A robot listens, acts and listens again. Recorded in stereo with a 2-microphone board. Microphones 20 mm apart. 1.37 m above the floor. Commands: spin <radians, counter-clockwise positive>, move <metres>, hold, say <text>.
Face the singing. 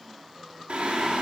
spin -1.57
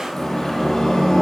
spin 0.52
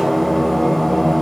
spin 0.35
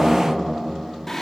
spin 0.35
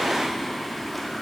say Found it: singing, straight ahead, 1 to 2 m away.